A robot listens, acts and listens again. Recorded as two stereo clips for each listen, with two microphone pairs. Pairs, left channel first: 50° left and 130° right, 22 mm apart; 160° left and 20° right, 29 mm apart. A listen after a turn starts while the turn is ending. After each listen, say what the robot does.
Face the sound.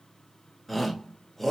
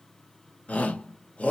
Turn 135° left.
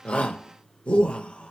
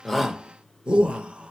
Turn 30° left.
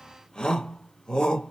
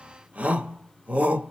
Found it: a shout, straight ahead.